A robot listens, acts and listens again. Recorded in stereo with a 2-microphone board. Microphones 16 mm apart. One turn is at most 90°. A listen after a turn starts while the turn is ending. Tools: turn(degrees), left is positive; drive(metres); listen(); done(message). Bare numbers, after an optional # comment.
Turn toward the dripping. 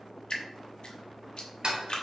# The dripping: about 50° left or 130° left.
turn(50)
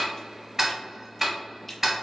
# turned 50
# So it is at 10° left.
turn(10)
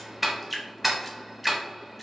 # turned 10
done("Found it: dripping, straight ahead, under 1 m away.")